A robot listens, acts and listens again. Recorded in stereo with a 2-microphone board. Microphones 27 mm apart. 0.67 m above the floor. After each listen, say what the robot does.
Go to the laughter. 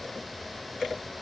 Keep listening.
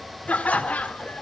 Turn 60° left.
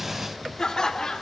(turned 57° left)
Turn 25° left.
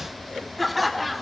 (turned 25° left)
Drive 1.0 m forward.
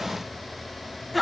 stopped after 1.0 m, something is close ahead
Arrived at the laughter, straight ahead.